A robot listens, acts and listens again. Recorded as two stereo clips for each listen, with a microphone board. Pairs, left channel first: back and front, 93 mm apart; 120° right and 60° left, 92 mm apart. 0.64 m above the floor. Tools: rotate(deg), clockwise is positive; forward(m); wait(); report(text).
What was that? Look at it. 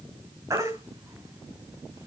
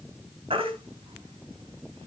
rotate(-55)
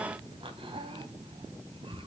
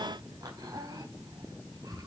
wait()
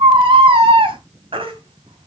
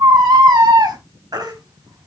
rotate(-15)
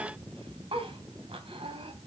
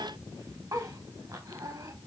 wait()
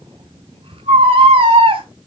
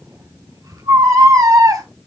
rotate(-10)
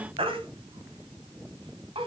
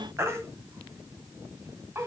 report("Facing the baby crying.")